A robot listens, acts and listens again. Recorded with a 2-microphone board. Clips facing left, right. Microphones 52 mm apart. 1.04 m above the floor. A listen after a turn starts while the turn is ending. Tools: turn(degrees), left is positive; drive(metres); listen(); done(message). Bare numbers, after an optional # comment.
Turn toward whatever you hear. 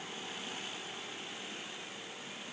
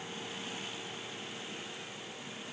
listen()
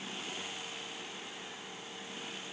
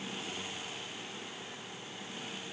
listen()
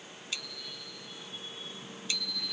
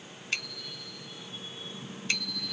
# The bicycle bell: about 50° right or 130° right.
turn(-50)
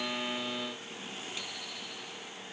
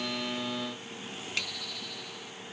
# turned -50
# So it is at 75° right.
turn(-75)
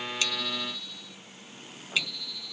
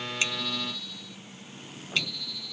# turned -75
done("Found it: a bicycle bell, straight ahead.")